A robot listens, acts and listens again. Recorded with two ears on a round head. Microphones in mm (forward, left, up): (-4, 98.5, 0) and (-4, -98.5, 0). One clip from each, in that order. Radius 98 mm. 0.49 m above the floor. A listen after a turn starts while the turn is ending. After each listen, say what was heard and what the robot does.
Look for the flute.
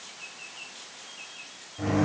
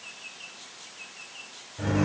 Keep listening.
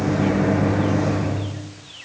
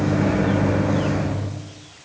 Keep listening.
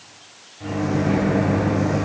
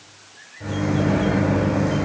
I can't make out a flute to turn to.